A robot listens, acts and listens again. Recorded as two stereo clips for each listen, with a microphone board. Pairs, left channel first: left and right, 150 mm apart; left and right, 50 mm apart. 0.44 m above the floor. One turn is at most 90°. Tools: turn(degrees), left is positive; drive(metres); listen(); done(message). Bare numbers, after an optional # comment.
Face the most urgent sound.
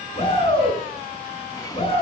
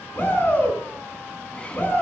# The shout: about 40° left or 140° left.
turn(40)
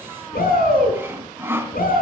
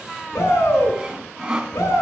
# So it is at 100° left.
turn(90)
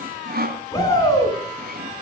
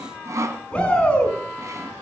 # The shout is now 25° left.
turn(25)
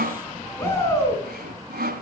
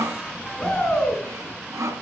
# The shout is now 15° left.
turn(15)
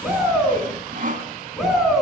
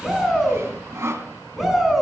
done("Facing the shout.")